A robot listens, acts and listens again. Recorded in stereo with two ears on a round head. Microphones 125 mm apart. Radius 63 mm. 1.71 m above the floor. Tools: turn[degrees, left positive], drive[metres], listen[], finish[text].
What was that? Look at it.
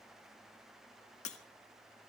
Thought: The breaking glass: about 50° left or 130° left.
Action: turn[50]
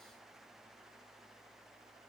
Action: listen[]
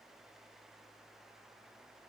Action: finish[I heard breaking glass, but can't make it out now. It was about straight ahead or 80° left.]